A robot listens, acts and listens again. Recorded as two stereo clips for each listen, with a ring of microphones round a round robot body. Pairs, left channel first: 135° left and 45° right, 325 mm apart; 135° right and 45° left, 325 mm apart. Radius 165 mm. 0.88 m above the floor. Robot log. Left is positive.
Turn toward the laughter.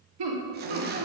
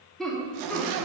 note: The laughter: 45° right.
cmd yaw -45
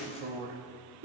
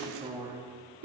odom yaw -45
end: Facing the laughter, 1 to 2 m away.